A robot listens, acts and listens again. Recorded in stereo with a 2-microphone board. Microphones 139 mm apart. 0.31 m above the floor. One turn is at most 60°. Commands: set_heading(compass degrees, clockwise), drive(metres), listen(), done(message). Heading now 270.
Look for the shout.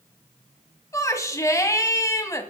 set_heading(250)
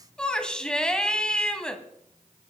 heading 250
done("Facing the shout, 1 to 2 m away.")